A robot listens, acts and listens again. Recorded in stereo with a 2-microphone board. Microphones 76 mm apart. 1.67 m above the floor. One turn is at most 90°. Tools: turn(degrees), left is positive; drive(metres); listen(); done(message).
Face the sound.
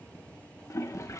turn(degrees=40)
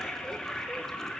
done("Found it: a toilet flushing, straight ahead.")